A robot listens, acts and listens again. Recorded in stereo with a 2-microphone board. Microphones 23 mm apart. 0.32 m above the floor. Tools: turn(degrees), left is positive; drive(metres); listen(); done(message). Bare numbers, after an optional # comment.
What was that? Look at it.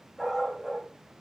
turn(30)
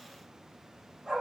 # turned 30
# So it is at 20° right.
turn(-20)
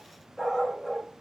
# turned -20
done("Found it: a dog barking, straight ahead, over 4 m away.")